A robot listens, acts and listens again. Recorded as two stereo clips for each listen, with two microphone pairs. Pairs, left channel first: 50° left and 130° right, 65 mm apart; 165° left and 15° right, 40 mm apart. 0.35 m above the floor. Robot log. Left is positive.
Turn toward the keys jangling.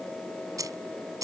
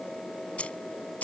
note: The keys jangling: 150° right.
cmd yaw -150
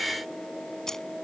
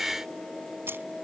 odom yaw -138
note: The keys jangling is now 30° right.
cmd yaw -30
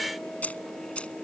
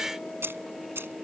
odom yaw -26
note: The keys jangling is now 20° right.
cmd yaw -20
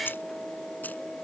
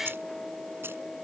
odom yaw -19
note: The keys jangling is now 10° right.
cmd yaw -10
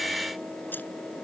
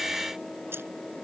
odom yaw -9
cmd idle
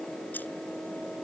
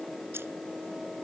cmd idle
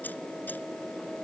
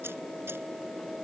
end: I heard keys jangling from this way, but can't make it out now.